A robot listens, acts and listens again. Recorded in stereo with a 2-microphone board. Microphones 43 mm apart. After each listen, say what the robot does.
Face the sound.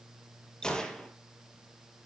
Turn 20° left.
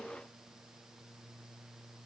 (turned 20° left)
Keep listening.
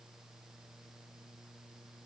I heard a gunshot, but can't make it out now. It was about straight ahead or 140° left.